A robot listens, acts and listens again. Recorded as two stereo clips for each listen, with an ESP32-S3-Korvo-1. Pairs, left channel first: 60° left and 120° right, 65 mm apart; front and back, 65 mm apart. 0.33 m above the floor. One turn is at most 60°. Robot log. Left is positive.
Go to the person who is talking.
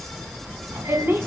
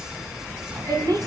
note: The woman speaking: 175° right.
cmd yaw -60
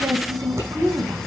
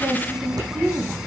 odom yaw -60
note: The woman speaking is now 110° right.
cmd yaw -60
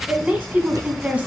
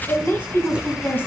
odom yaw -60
note: The woman speaking is now 55° right.
cmd yaw -55
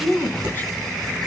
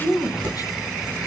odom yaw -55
cmd fwd 1.0
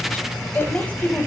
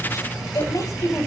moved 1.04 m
cmd fwd 1.0
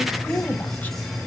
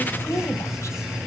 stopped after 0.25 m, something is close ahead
cmd idle
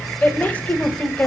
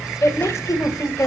end: Arrived at the woman speaking, straight ahead.